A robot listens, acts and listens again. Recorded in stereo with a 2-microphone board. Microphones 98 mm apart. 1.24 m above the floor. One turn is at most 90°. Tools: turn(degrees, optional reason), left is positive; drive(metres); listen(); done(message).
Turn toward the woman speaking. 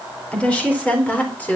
turn(degrees=15, reason="The woman speaking: about 15° left or 165° left.")
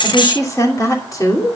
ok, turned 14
turn(degrees=35, reason="The woman speaking: about 35° left or 145° left.")
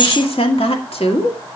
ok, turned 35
turn(degrees=90, reason="So it is at 100° left.")
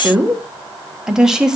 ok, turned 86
done("Found it: a woman speaking, straight ahead, 1 to 2 m away.")